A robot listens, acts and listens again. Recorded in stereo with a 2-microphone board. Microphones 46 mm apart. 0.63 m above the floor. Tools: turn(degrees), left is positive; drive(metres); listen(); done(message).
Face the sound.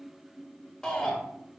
turn(degrees=30)
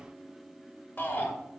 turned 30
turn(degrees=140)
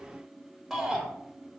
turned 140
done("Found it: a shout, straight ahead.")